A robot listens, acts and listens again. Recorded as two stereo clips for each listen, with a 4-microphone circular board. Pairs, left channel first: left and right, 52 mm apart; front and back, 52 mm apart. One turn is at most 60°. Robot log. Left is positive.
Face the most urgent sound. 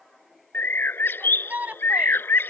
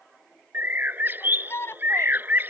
note: The shout: 35° right.
cmd yaw -35
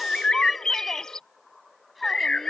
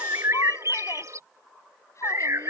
cmd idle
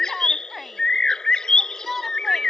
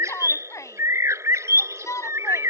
end: Facing the shout.